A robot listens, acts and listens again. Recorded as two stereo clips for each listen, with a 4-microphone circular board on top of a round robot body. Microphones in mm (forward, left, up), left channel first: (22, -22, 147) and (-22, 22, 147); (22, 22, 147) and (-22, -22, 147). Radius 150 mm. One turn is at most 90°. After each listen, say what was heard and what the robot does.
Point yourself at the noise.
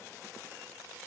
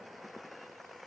Keep listening.
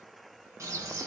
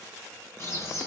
The bird: 95° left. Turn 90° left.
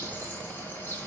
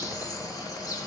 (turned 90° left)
The bird is now 15° left. Turn 15° left.
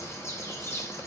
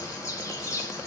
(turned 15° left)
Facing the bird.